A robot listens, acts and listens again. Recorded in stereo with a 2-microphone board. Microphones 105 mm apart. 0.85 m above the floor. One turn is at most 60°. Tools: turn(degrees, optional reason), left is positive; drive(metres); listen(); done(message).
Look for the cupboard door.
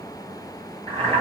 listen()
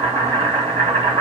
listen()
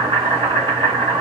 done("I can't make out a cupboard door, only boiling.")